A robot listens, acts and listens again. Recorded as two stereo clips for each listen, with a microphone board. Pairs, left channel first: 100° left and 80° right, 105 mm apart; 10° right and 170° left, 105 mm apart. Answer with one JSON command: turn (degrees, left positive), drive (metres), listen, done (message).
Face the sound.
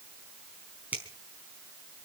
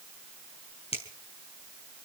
{"done": "Found it: a finger snap, straight ahead, over 4 m away."}